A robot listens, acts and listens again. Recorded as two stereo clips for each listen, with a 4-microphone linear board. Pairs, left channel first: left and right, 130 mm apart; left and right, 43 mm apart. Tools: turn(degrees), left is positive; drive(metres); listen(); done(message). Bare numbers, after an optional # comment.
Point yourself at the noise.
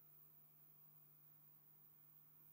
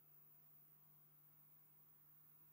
listen()
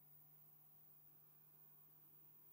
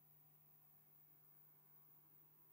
listen()
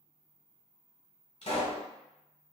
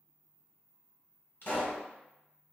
# The pop: about 55° left or 125° left.
turn(55)
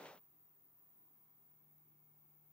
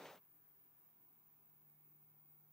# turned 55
listen()
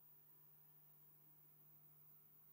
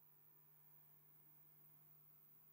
done("I heard a pop, but can't make it out now. It was about straight ahead or 70° left.")